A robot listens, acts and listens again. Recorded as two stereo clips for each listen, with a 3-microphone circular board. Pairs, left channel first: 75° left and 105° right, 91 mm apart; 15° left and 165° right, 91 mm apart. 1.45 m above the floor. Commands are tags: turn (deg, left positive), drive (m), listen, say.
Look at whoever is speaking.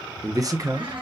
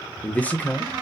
<turn deg="-55"/>
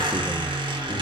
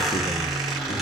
<listen/>
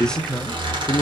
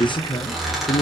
<say>Found it: a man speaking, straight ahead, under 1 m away.</say>